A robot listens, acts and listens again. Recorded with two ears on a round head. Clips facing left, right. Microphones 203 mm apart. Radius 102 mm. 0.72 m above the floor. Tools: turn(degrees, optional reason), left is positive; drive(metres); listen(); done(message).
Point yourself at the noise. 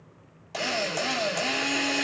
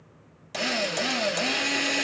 turn(degrees=-20, reason="The drill: about 20° right or 160° right.")
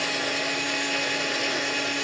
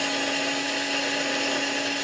done("Found it: a drill, straight ahead, 1 to 2 m away.")